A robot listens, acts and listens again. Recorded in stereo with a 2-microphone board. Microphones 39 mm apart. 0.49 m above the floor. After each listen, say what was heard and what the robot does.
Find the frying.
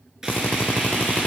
Turn 30° right.
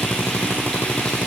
Keep listening.
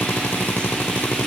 Keep listening.
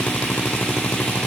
I heard frying, but can't make it out now. It was about 20° left or 140° right.